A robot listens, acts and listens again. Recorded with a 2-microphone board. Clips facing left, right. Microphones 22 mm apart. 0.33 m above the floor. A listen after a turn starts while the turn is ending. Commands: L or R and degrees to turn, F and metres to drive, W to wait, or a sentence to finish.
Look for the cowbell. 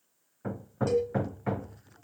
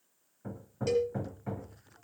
R25
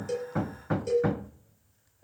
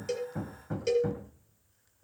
R125
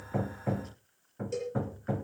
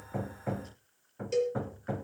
R30
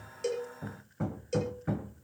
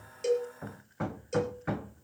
L10
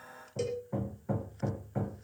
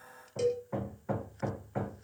Facing the cowbell, over 4 m away.